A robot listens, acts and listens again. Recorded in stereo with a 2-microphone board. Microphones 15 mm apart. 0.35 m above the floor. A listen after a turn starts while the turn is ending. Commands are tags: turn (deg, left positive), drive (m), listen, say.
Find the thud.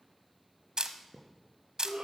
<turn deg="50"/>
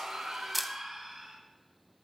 <listen/>
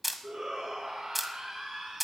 <say>I heard a thud, but can't make it out now. It was about straight ahead or 80° left.</say>